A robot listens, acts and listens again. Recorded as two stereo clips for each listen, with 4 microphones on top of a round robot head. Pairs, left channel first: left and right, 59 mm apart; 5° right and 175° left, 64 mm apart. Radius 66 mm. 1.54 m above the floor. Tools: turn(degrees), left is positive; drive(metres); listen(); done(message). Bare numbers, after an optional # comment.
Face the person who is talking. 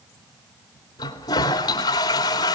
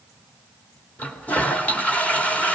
listen()
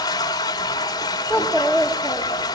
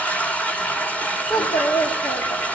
done("Found it: a child speaking, straight ahead, 2 to 4 m away.")